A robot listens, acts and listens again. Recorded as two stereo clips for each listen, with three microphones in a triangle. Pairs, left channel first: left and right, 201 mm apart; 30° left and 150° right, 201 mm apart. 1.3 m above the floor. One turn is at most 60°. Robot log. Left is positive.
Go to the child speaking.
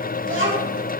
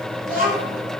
note: The child speaking: 105° right.
cmd yaw -60
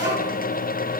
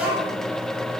note: The child speaking is now 65° right.
cmd yaw -60
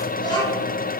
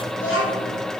note: The child speaking is now 20° left.
cmd yaw +20
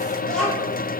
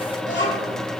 cmd fwd 1.0
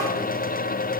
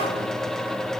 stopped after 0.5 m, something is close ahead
cmd idle
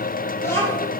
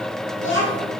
note: The child speaking is now 10° left.
cmd yaw +10
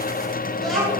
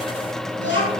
end: Something is in my way. I am facing the child speaking but have not reached it.